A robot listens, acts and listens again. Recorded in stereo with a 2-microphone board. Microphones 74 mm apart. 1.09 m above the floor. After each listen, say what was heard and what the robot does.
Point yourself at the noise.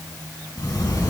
The sliding door: about 50° left or 130° left. Turn 50° left.
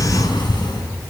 So it is at 80° left. Turn 80° left.
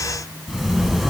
Found it: a sliding door, straight ahead, over 4 m away.